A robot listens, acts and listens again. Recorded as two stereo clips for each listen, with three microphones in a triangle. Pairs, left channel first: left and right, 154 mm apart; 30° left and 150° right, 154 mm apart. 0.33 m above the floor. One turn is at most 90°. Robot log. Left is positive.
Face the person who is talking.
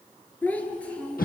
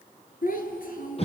end: Found it: a child speaking, straight ahead, 2 to 4 m away.